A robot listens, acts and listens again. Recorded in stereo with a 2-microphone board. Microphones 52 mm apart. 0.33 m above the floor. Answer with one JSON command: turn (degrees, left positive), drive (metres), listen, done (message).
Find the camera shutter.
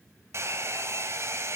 {"listen": true}
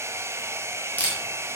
{"turn": 30}
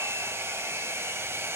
{"listen": true}
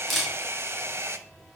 {"done": "Facing the camera shutter, over 4 m away."}